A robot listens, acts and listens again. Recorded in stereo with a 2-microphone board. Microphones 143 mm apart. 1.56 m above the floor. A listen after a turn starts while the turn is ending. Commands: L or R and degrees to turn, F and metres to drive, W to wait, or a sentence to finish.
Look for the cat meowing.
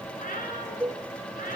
L70
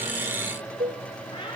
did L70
L35
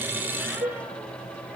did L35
W
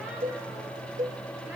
W
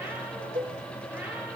Facing where the cat meowing came from. I can't hear it now.